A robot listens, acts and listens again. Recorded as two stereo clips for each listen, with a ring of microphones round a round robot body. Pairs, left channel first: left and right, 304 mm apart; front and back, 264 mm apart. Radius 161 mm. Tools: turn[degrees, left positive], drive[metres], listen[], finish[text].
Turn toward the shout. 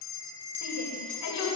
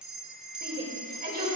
Thought: The shout: 125° left.
Action: turn[125]
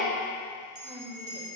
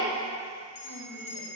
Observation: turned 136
Thought: Nothing new. It was at 10° right.
Action: turn[-10]
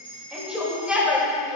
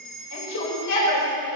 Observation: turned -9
Action: finish[Found it: a shout, straight ahead.]